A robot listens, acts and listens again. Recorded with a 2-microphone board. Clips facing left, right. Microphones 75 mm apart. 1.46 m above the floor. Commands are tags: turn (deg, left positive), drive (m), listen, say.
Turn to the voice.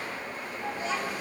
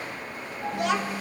<turn deg="-70"/>
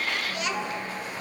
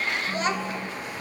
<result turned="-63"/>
<turn deg="-35"/>
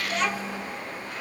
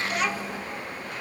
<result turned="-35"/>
<say>Found it: a child speaking, straight ahead.</say>